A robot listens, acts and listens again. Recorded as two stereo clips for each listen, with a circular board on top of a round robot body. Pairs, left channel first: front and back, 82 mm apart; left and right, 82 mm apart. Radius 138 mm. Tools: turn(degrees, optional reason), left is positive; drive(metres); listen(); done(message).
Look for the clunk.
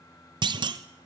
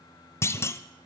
turn(degrees=150, reason="The clunk: 150° left.")
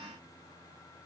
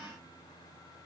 done("Facing where the clunk came from. I can't hear it now.")